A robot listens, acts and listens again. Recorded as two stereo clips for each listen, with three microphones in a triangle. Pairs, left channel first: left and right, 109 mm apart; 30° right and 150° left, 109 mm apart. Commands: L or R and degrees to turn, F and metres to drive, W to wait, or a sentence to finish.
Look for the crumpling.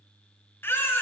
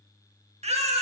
W
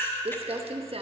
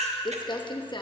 R70
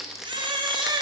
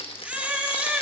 Found it: crumpling, straight ahead, 1 to 2 m away.